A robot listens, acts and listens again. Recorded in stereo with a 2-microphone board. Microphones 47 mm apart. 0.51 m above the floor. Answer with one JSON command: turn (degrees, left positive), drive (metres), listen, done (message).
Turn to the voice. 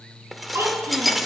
{"turn": -90}
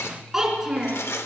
{"turn": -10}
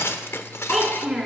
{"done": "Facing the child speaking."}